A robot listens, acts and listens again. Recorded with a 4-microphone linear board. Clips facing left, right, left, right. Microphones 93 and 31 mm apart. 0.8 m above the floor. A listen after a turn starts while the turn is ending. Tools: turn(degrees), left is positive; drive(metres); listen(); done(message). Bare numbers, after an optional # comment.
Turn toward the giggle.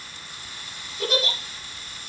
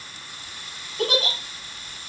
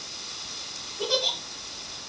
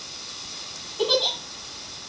turn(-90)
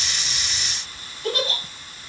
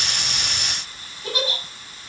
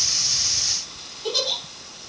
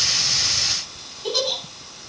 done("Facing the giggle, over 4 m away.")